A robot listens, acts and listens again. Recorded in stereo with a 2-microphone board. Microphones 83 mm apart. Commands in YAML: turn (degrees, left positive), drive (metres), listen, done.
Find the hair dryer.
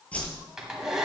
turn: -30
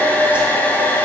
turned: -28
turn: 20
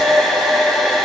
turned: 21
done: "Found it: a hair dryer, straight ahead, 1 to 2 m away."